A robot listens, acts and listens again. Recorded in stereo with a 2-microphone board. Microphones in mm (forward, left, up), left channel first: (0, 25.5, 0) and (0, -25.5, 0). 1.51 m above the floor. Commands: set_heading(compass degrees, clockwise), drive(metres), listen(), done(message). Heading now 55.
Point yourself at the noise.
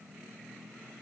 listen()
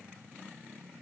listen()
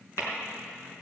set_heading(340)
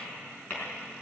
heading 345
set_heading(315)
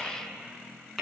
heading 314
done("Found it: tapping, straight ahead, over 4 m away.")